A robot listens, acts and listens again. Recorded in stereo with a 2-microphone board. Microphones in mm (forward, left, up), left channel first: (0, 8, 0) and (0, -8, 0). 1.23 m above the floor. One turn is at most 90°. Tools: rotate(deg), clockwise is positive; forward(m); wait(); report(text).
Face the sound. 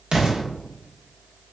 rotate(65)
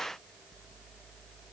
wait()
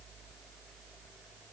report("I heard an explosion, but can't make it out now. It was about straight ahead or 50° right.")